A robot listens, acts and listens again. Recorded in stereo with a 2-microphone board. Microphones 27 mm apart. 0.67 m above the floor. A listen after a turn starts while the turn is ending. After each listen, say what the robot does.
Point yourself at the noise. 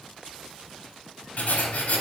Turn 65° left.
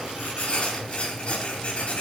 Turn 50° left.
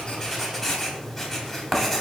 Turn 10° left.
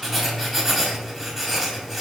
Found it: writing, straight ahead.